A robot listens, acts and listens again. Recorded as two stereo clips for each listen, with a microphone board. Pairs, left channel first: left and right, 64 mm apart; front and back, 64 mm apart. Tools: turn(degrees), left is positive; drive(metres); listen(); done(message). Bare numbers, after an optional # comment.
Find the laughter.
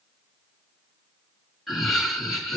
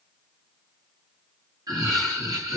# The laughter: 175° left.
turn(175)
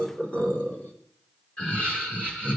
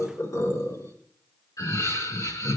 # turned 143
# The laughter is now 20° left.
turn(20)
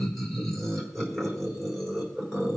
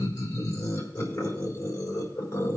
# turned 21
done("Facing the laughter.")